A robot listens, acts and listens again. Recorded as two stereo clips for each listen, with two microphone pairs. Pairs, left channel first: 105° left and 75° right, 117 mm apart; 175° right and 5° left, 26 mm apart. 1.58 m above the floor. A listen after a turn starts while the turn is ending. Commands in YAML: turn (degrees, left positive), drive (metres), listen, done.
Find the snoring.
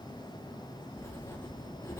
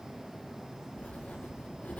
listen: true
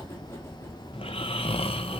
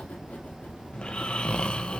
turn: 135
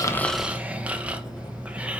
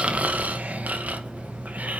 done: "Found it: snoring, straight ahead."